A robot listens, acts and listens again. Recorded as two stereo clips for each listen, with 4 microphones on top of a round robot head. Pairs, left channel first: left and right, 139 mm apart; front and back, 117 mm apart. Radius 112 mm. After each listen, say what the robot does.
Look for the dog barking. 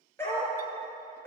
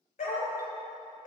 Turn 15° left.
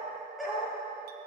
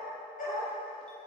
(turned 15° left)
Found it: a dog barking, straight ahead.